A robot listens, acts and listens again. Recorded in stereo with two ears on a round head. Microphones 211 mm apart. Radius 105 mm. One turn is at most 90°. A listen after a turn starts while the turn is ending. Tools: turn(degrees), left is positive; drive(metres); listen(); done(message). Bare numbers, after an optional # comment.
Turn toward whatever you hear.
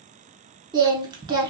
# The singing: about 20° right or 160° right.
turn(-20)
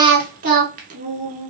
# So it is at 140° right.
turn(-90)
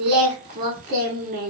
# The singing is now 40° right.
turn(-40)
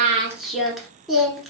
done("Facing the singing, under 1 m away.")